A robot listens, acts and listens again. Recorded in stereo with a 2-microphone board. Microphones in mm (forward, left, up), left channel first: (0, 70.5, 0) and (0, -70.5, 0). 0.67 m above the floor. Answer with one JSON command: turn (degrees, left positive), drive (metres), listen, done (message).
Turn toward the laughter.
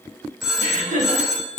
{"turn": -65}
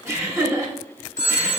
{"turn": -20}
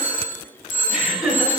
{"done": "Found it: laughter, straight ahead."}